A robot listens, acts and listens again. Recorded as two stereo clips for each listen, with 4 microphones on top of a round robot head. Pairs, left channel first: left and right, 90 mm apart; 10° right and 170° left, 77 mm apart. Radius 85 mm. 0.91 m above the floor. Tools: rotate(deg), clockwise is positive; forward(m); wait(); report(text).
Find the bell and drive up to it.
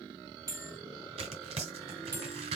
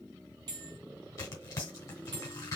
rotate(145)
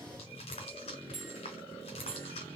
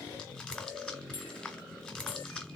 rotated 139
forward(1.0)
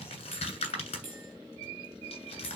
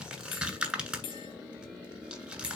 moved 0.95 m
rotate(10)
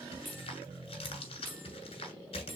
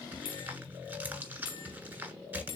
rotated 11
forward(1.0)
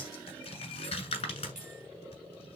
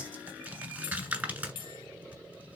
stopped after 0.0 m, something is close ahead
report("Arrived at the bell, straight ahead.")